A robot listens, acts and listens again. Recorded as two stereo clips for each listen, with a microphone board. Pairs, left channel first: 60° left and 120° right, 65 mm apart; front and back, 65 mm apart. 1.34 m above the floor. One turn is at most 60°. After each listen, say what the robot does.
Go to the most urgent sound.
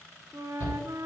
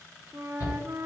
Turn 35° left.
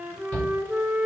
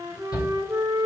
Turn 10° right.
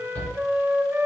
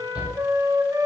Drive 1.0 m forward.
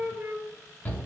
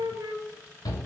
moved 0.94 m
Drive 1.0 m forward.
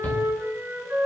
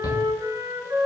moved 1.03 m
Drive 1.0 m forward.
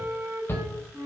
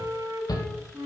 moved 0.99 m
Turn 10° left.
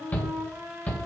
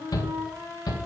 Drive 1.0 m forward.
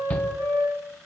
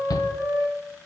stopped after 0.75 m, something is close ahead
I am next to the shout.